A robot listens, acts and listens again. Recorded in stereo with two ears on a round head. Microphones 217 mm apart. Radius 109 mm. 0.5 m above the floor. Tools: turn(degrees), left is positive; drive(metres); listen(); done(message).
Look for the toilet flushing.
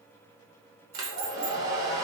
listen()
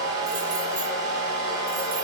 listen()
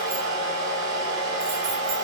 done("I can't make out a toilet flushing to turn to.")